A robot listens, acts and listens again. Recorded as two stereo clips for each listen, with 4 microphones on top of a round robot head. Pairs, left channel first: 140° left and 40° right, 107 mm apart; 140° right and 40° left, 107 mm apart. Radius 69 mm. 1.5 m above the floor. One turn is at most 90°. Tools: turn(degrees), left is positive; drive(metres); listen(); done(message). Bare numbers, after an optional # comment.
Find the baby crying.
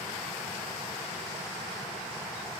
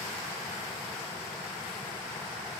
listen()
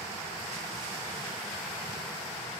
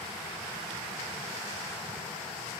listen()
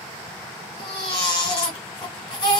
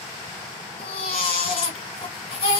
# The baby crying: 175° right.
turn(-90)
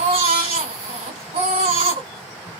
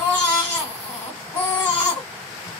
# The baby crying is now 70° right.
turn(-70)
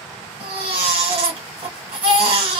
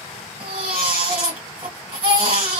done("Facing the baby crying, 1 to 2 m away.")